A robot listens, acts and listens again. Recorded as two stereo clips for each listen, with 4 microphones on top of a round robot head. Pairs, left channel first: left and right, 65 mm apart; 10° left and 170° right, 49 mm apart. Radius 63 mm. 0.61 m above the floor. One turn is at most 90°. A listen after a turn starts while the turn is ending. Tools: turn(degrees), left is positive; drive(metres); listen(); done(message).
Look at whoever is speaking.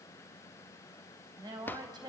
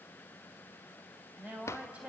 turn(degrees=-90)
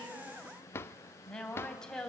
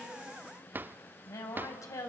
turn(degrees=10)
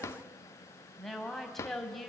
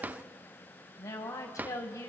done("Facing the woman speaking, 2 to 4 m away.")